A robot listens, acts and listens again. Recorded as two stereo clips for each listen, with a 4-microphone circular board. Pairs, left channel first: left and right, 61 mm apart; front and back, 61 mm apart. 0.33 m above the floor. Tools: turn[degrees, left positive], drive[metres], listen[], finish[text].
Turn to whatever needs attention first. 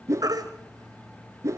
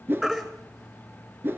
Thought: The baby crying: 90° right.
Action: turn[-90]
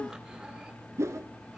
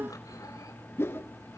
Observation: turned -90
Action: listen[]
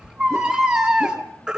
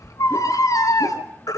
Thought: The baby crying is now 10° right.
Action: turn[-10]
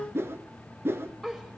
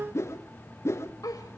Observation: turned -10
Action: listen[]
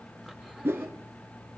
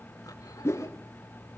Action: listen[]
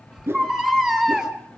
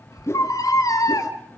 Action: finish[Found it: a baby crying, straight ahead, 2 to 4 m away.]